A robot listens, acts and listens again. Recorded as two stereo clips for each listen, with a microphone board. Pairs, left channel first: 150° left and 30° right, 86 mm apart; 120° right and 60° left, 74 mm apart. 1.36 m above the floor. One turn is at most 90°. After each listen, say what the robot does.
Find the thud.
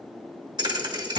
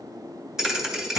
Turn 25° right.
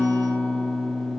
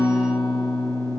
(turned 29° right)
Facing where the thud came from. I can't hear it now.